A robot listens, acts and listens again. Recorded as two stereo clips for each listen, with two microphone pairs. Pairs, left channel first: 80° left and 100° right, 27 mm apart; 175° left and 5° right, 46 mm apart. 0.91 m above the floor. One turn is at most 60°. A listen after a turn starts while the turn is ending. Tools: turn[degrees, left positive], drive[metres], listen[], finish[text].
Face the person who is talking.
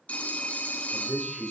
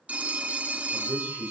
Thought: The man speaking: 20° left.
Action: turn[20]
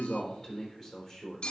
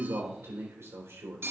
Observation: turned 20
Action: finish[Found it: a man speaking, straight ahead.]